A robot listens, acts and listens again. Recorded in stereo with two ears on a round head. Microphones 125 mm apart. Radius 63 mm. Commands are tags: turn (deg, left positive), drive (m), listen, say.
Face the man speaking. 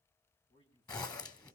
<turn deg="30"/>
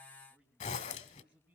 <turn deg="-10"/>
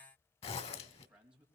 <turn deg="-10"/>
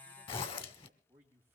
<turn deg="-15"/>
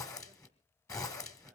<listen/>
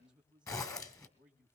<say>Found it: a man speaking, straight ahead, 2 to 4 m away.</say>